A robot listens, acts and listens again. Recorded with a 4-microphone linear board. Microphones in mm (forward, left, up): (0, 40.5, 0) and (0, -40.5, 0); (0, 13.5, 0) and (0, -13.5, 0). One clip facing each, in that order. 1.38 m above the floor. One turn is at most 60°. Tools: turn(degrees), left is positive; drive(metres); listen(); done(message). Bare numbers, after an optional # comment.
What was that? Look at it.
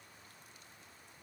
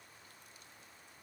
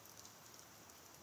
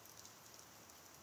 listen()
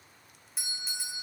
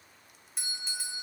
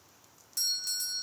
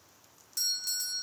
turn(30)
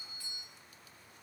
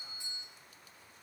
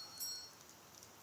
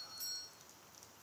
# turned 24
# So it is at 25° right.
turn(-25)
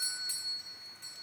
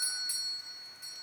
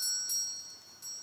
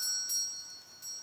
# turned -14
# The doorbell is now 10° right.
turn(-10)
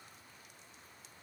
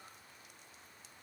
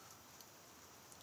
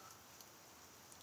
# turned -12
done("Found it: a doorbell, straight ahead, 1 to 2 m away.")